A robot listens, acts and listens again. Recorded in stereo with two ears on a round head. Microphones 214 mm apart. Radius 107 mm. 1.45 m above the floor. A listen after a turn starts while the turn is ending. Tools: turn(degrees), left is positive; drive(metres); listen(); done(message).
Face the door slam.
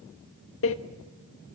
turn(degrees=60)
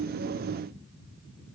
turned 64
listen()
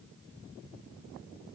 done("I heard a door slam, but can't make it out now. It was about 5° right or 55° left.")